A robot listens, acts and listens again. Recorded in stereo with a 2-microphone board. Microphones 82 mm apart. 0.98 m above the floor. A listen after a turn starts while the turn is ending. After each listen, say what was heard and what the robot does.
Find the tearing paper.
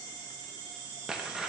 Turn 30° right.
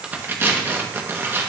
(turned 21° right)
So it is at 150° right. Turn 150° right.
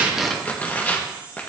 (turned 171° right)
The tearing paper is now 25° left. Turn 25° left.
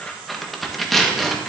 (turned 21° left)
Facing the tearing paper.